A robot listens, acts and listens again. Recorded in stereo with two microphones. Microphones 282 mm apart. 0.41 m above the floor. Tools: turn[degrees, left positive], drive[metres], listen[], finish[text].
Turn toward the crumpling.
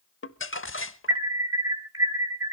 Thought: The crumpling: about 50° left or 130° left.
Action: turn[50]
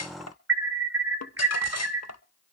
Thought: So it is at 80° left.
Action: turn[80]
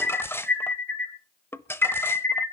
Thought: The crumpling is now 10° left.
Action: turn[10]
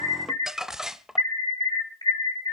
Action: finish[Found it: crumpling, straight ahead, under 1 m away.]